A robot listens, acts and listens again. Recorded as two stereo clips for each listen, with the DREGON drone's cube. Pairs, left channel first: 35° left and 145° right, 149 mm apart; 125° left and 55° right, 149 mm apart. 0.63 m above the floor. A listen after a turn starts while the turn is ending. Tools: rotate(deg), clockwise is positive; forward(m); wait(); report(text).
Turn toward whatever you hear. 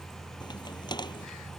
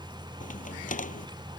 rotate(-95)
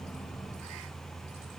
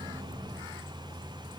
report("I heard a crack from this way, but can't make it out now.")